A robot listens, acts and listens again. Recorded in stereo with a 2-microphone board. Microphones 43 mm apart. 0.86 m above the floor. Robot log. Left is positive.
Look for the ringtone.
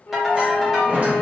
cmd yaw -30
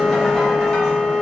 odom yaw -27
cmd idle
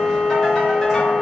cmd idle
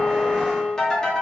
note: So it is at 15° left.
cmd yaw +15
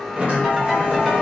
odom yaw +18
end: Found it: a ringtone, straight ahead.